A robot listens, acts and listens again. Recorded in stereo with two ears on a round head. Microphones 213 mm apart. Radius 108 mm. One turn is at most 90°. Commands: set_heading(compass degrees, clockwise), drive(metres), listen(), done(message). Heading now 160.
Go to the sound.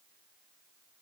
listen()
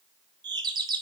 set_heading(180)
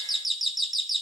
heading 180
drive(1.0)
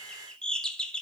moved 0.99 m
drive(1.0)
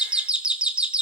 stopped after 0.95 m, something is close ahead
done("I am next to the doorbell.")